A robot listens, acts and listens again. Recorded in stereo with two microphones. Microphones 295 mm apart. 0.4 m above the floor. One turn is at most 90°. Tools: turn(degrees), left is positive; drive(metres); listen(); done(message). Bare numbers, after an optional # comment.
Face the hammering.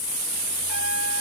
listen()
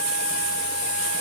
listen()
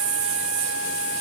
done("I can't make out hammering.")